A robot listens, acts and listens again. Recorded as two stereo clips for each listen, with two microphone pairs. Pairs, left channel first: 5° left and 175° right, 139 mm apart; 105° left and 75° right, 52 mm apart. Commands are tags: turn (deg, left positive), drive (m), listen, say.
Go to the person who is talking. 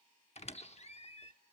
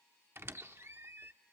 <listen/>
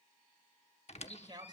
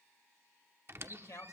<turn deg="125"/>
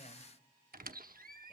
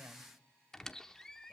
<listen/>
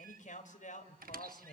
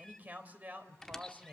<turn deg="-15"/>
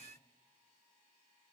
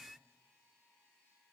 <listen/>
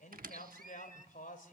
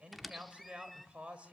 <drive m="1.0"/>
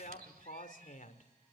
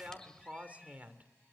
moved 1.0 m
<turn deg="-15"/>
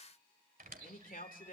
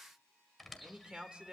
<drive m="1.0"/>
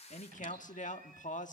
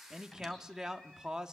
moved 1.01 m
<drive m="1.0"/>
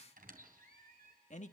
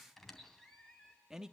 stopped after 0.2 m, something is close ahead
<say>I am next to the man speaking.</say>